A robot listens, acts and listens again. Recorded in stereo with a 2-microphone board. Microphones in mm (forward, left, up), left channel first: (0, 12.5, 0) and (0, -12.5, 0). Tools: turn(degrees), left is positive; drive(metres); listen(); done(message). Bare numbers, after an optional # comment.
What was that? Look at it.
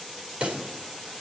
# The pop: about 50° right or 130° right.
turn(-50)
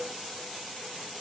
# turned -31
listen()
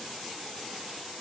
done("I heard a pop, but can't make it out now. It was about 20° right or 100° right.")